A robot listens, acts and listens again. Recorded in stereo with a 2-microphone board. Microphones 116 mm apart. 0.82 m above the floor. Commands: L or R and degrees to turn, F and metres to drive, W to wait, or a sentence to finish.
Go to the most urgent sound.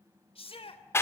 L55
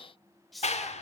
F1.0
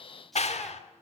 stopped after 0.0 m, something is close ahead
W
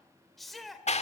Something is in my way. I am facing the shout but have not reached it.